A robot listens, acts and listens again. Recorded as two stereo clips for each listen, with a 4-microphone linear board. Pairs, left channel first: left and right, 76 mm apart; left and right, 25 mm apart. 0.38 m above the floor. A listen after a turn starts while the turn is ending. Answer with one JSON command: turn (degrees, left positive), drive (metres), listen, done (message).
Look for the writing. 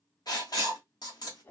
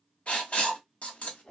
{"turn": 60}
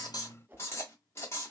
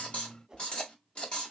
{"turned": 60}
{"turn": 45}
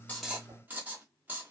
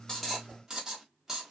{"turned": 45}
{"turn": -25}
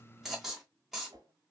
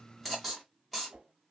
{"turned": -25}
{"done": "Found it: writing, straight ahead."}